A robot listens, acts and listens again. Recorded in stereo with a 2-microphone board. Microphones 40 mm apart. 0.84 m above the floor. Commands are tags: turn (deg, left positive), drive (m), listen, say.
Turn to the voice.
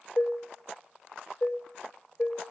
<listen/>
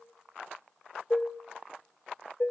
<listen/>
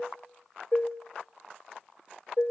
<say>I can't make out anyone speaking to turn to.</say>